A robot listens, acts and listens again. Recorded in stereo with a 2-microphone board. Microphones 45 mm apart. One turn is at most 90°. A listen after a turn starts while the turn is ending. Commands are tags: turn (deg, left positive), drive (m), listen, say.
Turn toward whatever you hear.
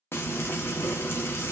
<turn deg="65"/>
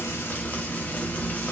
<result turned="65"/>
<turn deg="40"/>
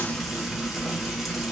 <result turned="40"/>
<say>Facing the frying.</say>